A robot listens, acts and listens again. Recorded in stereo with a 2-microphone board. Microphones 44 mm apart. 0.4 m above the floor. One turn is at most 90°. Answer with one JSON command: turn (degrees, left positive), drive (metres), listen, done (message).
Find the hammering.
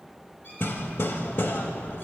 {"turn": 60}
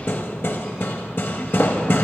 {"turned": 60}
{"turn": 55}
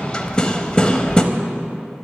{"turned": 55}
{"turn": 20}
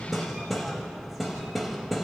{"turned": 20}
{"done": "Facing the hammering."}